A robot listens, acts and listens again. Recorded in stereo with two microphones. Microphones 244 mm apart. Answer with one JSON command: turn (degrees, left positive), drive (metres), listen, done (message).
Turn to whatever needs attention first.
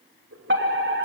{"turn": -50}
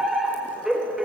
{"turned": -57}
{"done": "Found it: a fire alarm, straight ahead."}